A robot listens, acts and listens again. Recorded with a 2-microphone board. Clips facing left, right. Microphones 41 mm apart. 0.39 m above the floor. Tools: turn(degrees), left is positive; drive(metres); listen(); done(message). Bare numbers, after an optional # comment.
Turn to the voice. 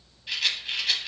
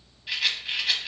listen()
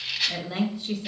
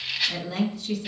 # The woman speaking: about 20° left or 160° left.
turn(20)
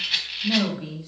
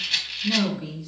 # So it is at 135° left.
turn(135)
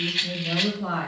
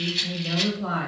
done("Found it: a woman speaking, straight ahead, 1 to 2 m away.")